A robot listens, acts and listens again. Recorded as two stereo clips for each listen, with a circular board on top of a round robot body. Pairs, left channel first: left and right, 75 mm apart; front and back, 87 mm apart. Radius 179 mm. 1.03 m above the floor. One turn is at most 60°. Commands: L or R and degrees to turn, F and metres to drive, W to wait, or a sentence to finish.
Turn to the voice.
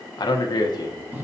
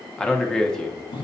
L60
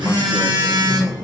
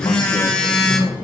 L20
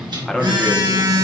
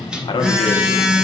Found it: a man speaking, straight ahead, 1 to 2 m away.